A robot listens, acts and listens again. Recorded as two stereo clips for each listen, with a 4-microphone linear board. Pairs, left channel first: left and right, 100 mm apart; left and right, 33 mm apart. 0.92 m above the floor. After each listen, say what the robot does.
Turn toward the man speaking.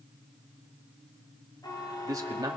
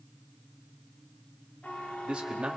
Turn 40° right.
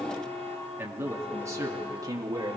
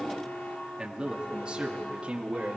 Turn 40° right.
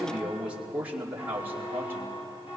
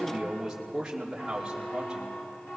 Turn 20° right.
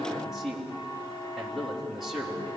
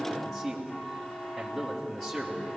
Facing the man speaking, 2 to 4 m away.